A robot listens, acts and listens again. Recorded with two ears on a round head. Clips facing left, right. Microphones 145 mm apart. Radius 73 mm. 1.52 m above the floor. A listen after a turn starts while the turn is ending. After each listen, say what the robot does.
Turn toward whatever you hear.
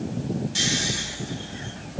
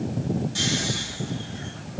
Turn 25° left.
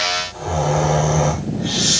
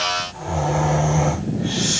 Turn 130° left.
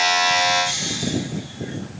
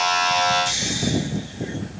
Turn 25° right.
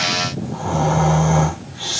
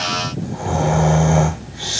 Turn 20° right.
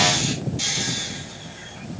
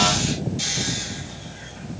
Facing the snoring.